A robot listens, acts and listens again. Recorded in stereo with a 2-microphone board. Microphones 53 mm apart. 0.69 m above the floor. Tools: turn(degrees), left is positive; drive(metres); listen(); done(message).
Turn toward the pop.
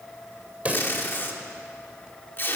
turn(degrees=-30)
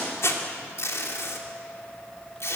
listen()
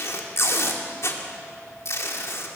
done("I heard a pop, but can't make it out now. It was about straight ahead or 120° right.")